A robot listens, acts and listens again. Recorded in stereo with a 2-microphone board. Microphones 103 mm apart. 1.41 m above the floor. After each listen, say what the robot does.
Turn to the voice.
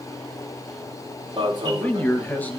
Turn 15° left.
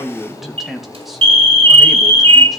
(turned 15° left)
Facing the man speaking.